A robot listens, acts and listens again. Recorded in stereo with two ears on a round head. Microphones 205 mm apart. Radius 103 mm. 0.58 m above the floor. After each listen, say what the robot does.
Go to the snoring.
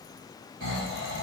Turn 55° right.
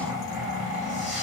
Drive 1.0 m forward.
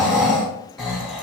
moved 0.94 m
Drive 1.0 m forward.
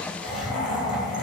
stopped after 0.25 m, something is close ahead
I am next to the snoring.